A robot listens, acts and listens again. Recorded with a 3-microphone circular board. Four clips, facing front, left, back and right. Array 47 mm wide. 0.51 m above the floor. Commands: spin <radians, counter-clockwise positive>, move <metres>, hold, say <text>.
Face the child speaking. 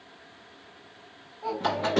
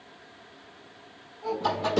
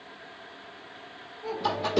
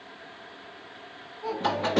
say Found it: a child speaking, straight ahead.